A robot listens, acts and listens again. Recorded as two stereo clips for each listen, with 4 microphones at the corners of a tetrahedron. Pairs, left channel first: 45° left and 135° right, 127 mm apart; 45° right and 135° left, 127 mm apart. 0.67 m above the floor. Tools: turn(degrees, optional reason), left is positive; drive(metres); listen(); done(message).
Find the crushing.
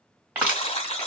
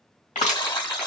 turn(degrees=-60, reason="The crushing: 60° right.")
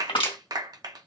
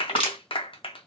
done("Found it: crushing, straight ahead.")